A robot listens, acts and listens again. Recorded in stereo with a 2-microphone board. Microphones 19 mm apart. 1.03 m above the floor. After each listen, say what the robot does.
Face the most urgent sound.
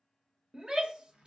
Turn 40° right.
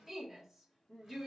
Found it: a shout, straight ahead.